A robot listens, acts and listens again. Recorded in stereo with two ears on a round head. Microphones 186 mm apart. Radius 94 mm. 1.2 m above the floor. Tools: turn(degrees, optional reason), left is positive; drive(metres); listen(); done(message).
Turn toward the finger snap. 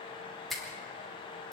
turn(degrees=30)
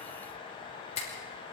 turn(degrees=145, reason="So it is at 145° left.")
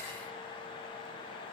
listen()
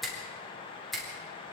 done("Found it: a finger snap, straight ahead, over 4 m away.")